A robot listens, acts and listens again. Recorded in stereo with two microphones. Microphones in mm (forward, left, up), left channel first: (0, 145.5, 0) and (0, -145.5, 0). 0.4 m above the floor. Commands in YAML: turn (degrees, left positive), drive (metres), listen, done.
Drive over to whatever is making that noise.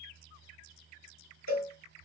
turn: 60
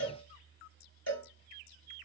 turn: 55
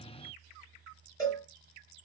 turn: 10
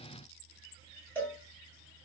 drive: 1.0
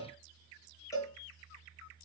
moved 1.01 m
turn: 10
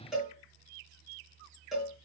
drive: 1.0
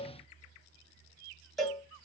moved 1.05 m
drive: 1.0
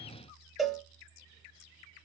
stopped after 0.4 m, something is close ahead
done: "I am next to the cowbell."